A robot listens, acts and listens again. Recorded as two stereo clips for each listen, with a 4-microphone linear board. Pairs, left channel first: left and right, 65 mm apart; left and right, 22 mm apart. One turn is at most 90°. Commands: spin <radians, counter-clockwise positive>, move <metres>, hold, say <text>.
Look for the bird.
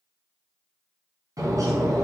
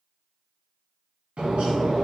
spin -1.05
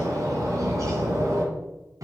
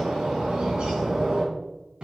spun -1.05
spin -1.05
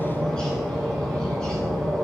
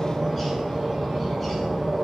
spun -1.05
spin 0.26
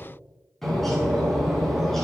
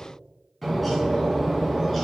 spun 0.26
say Facing the bird.